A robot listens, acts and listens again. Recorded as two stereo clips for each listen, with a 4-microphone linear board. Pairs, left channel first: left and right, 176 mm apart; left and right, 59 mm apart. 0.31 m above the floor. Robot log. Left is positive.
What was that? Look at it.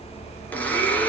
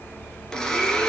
cmd yaw +30
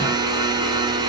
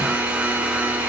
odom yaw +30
note: So it is at 25° right.
cmd yaw -25
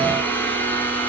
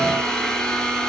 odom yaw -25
note: The blender is now 10° left.
cmd yaw +10
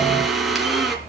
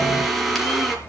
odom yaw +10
end: Found it: a blender, straight ahead.